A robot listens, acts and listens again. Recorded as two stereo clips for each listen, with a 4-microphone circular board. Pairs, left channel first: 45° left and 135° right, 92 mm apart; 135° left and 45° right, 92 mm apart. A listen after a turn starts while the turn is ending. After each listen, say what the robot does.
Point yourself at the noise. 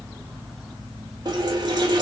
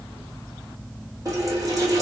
Turn 95° right.
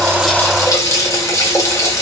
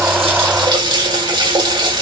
Turn 10° right.
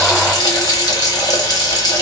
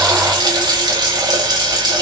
Facing the running tap, 1 to 2 m away.